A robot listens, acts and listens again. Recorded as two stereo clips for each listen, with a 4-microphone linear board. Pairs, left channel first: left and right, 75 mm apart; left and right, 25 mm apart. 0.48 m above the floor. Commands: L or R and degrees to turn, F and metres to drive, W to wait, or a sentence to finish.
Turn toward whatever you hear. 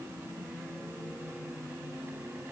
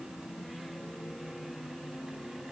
W
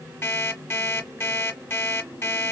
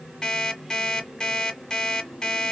L30
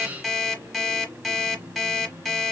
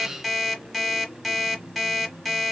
Found it: an alarm clock, straight ahead, 1 to 2 m away.